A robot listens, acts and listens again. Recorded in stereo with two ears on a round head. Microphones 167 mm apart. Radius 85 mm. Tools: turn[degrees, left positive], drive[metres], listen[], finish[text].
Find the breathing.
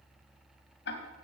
Action: listen[]
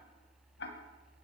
Action: listen[]
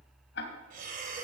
Thought: The breathing: about 55° right or 125° right.
Action: turn[-55]
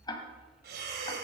Thought: So it is at 65° right.
Action: turn[-65]
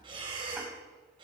Thought: The breathing is now 30° right.
Action: turn[-30]
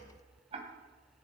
Action: listen[]
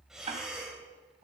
Action: finish[Facing the breathing.]